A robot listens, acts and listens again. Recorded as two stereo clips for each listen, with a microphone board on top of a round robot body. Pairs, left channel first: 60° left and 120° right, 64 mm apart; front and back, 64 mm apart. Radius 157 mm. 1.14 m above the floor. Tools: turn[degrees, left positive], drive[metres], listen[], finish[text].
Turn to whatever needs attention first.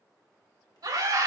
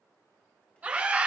Thought: The scream: 110° right.
Action: turn[-110]
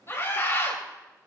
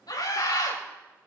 Thought: The scream is now 10° left.
Action: turn[10]
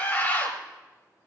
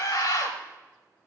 Action: finish[Facing the scream.]